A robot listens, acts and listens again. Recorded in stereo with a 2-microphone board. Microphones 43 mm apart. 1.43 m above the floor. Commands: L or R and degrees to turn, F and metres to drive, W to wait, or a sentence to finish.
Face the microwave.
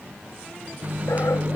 R35
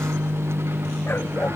R105
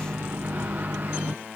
R45
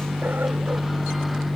Facing the microwave.